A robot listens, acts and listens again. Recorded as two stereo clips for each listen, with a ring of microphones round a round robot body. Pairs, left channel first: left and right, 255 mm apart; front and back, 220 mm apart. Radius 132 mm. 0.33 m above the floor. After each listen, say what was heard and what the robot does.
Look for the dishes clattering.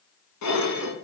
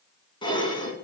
The dishes clattering: 70° left. Turn 70° left.
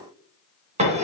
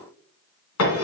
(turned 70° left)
The dishes clattering is now 25° right. Turn 25° right.
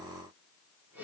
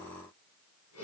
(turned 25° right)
Keep listening.
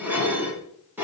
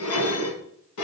Found it: dishes clattering, straight ahead, 2 to 4 m away.